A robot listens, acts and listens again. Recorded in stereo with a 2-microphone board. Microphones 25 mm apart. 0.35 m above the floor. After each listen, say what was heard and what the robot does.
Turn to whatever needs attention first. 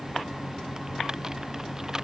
Keep listening.
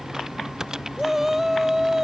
Turn 30° right.
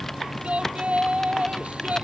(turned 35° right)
So it is at 130° right. Turn 130° right.
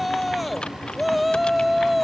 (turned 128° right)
Facing the shout.